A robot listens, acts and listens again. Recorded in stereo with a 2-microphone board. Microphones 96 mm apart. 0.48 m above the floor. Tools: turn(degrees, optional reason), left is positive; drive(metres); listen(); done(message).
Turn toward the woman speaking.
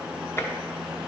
listen()
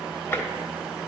listen()
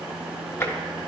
done("I can't make out a woman speaking, only tapping.")